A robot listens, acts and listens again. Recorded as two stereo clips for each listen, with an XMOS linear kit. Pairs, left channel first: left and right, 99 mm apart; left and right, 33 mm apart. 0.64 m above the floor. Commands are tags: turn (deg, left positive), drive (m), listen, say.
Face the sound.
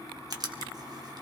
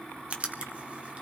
<turn deg="-40"/>
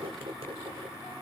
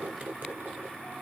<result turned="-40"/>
<turn deg="-90"/>
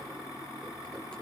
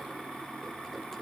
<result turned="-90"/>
<listen/>
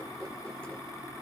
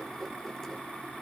<listen/>
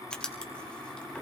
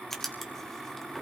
<turn deg="10"/>
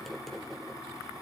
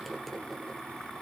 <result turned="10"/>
<listen/>
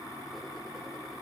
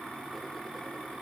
<listen/>
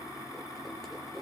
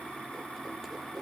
<say>Facing where the writing came from. I can't hear it now.</say>